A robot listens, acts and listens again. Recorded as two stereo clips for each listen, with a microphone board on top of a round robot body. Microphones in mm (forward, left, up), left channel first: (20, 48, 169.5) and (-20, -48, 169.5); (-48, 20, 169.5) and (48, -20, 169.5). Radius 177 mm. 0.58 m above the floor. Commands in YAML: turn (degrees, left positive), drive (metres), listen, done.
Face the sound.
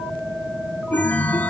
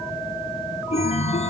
turn: 145
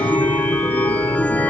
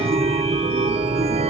done: "Found it: a chime, straight ahead, 1 to 2 m away."